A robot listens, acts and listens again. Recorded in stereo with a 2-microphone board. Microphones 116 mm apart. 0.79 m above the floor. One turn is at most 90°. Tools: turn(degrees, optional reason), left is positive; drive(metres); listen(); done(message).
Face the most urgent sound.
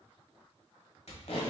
listen()
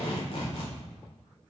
listen()
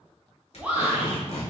turn(degrees=-30)
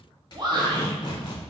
turn(degrees=-90, reason="So it is at 135° right.")
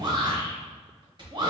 turn(degrees=-45, reason="The shout is now 45° right.")
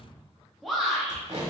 done("Found it: a shout, straight ahead, under 1 m away.")